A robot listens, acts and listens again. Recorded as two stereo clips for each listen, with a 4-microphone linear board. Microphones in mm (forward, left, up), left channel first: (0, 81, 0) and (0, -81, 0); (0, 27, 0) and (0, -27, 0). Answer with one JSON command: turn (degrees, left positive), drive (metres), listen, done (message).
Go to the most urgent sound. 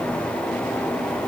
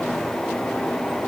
{"listen": true}
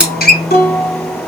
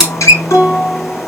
{"listen": true}
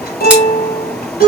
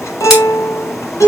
{"done": "I can't make out anything urgent, only a guitar."}